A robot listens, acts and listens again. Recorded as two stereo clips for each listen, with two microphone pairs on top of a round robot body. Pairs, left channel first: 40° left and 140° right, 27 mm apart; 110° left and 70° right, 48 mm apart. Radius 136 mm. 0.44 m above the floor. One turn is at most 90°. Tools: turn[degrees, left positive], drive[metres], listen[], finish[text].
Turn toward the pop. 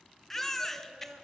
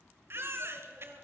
Action: listen[]
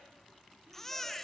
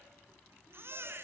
Action: listen[]
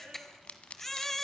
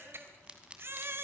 Action: finish[Found it: a pop, straight ahead, 1 to 2 m away.]